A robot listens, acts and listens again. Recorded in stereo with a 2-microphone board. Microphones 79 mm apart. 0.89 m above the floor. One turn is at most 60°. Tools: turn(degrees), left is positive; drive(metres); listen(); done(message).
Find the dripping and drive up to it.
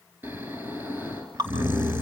turn(degrees=-60)
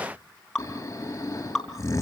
drive(metres=1.0)
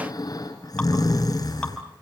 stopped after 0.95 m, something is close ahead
listen()
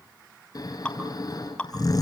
turn(degrees=15)
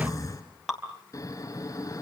done("Blocked. The dripping is further on, straight ahead.")